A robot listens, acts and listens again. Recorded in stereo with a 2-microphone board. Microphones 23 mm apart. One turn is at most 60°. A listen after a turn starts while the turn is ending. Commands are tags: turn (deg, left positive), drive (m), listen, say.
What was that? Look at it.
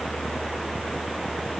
<listen/>
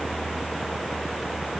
<listen/>
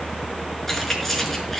<turn deg="30"/>
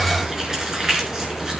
<turn deg="-25"/>
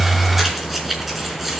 <say>Found it: keys jangling, straight ahead, over 4 m away.</say>